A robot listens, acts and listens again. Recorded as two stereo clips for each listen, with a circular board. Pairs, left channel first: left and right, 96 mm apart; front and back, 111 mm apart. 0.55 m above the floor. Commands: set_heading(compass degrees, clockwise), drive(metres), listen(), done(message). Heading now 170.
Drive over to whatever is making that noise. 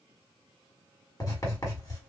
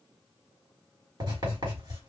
set_heading(35)
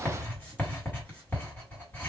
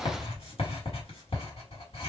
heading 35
set_heading(15)
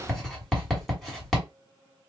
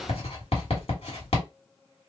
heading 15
drive(1.0)
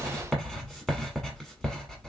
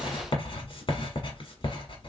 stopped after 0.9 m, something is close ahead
done("Arrived at the writing, straight ahead.")